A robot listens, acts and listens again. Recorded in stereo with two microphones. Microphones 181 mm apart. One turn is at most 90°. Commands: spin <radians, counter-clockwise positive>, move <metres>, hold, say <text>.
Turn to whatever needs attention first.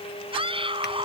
spin -0.52
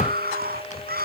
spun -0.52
spin -1.57
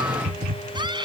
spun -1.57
spin -0.44
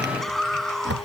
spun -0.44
say Facing the scream.